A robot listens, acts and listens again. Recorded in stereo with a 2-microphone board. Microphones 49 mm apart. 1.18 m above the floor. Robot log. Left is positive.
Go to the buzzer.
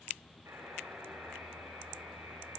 note: The buzzer: about 70° right or 110° right.
cmd yaw -70
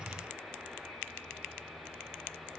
note: So it is at 40° right.
cmd yaw -40
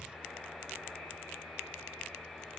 note: The buzzer is now 10° right.
cmd yaw -10
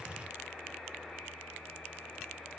cmd fwd 1.0
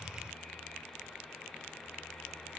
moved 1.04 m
cmd idle
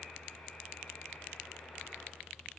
cmd idle
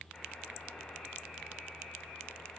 cmd fwd 1.0
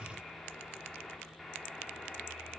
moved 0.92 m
cmd fwd 1.0
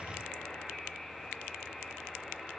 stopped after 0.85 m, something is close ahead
end: I am next to the buzzer.